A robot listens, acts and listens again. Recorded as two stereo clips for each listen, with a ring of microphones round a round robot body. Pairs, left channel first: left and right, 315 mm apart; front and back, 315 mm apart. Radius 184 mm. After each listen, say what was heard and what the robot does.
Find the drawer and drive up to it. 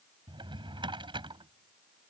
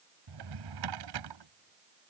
The drawer: 165° right. Turn 165° right.
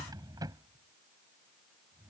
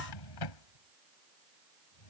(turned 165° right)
The drawer is now 10° right. Turn 10° right.
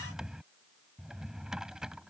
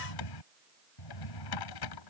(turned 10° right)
Drive 1.0 m forward.
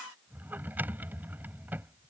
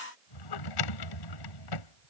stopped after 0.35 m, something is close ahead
Something is in my way. I am facing the drawer but have not reached it.